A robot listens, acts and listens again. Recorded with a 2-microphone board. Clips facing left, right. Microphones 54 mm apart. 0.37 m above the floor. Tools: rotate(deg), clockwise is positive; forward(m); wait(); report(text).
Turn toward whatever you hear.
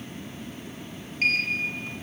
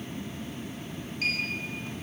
rotate(-45)
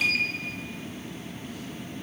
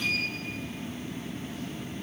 rotate(-90)
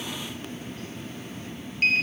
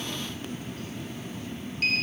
rotate(-35)
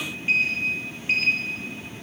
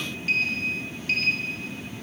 rotate(-20)
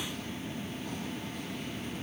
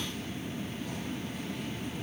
wait()
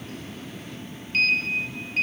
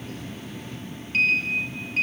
report("Facing the sliding door, 2 to 4 m away.")